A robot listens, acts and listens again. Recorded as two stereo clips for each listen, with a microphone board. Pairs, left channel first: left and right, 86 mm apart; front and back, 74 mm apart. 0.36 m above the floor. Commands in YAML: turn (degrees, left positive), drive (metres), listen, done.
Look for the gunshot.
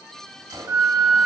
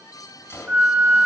turn: -55
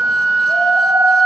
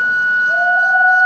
done: "Facing where the gunshot came from. I can't hear it now."